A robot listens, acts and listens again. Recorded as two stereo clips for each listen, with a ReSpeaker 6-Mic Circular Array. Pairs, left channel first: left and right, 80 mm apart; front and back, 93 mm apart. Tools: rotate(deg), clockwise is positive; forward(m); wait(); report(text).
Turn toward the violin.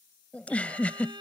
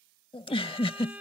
rotate(105)
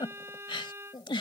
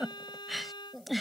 rotate(35)
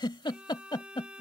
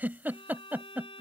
rotate(15)
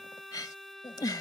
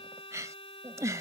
report("Found it: a violin, straight ahead.")